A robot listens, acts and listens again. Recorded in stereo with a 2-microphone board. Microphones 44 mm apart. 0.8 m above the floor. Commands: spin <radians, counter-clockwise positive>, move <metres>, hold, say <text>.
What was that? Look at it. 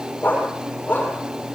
spin 0.70
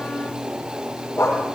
spin 1.75
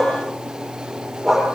say Facing the dog barking.